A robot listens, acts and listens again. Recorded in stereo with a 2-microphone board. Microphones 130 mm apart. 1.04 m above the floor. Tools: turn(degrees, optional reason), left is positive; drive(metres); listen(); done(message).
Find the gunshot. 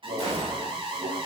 turn(degrees=-50, reason="The gunshot: about 50° right or 130° right.")
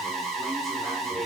listen()
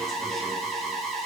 done("I heard a gunshot, but can't make it out now. It was about straight ahead or 80° right.")